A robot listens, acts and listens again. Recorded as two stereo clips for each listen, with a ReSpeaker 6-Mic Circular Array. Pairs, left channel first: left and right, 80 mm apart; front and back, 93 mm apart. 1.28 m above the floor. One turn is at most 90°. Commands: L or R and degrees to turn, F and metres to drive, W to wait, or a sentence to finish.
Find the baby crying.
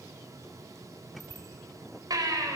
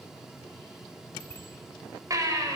R90
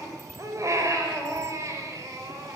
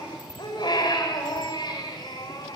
R40
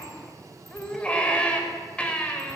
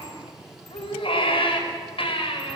L15
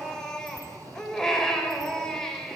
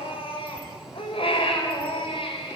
L10
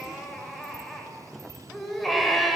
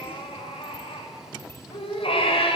Facing the baby crying.